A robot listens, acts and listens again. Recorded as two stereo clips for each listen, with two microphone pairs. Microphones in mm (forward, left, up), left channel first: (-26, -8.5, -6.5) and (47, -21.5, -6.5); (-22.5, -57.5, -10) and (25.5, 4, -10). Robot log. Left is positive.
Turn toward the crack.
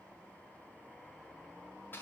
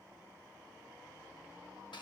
cmd idle
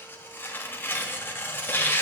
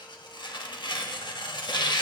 cmd idle
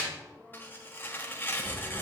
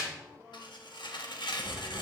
note: The crack: 75° right.
cmd yaw -75
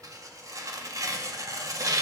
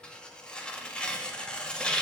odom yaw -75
end: I heard a crack from this way, but can't make it out now.